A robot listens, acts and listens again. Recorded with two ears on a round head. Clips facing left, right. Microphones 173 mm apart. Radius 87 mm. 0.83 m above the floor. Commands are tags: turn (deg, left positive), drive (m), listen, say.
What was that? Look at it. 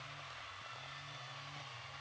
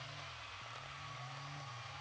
<listen/>
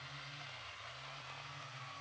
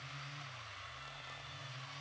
<listen/>
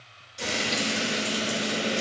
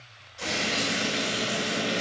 <turn deg="40"/>
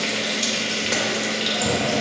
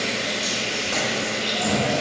<turn deg="95"/>
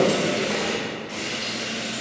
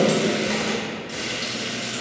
<turn deg="-15"/>
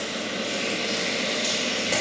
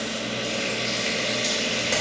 <say>Found it: frying, straight ahead.</say>